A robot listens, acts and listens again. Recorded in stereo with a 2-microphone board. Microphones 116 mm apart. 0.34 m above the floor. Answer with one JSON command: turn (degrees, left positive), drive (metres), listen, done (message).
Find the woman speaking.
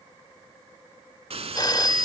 {"listen": true}
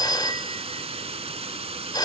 {"listen": true}
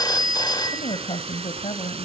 {"turn": 55}
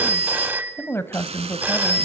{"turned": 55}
{"turn": 25}
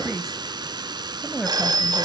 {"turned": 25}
{"done": "Facing the woman speaking, 1 to 2 m away."}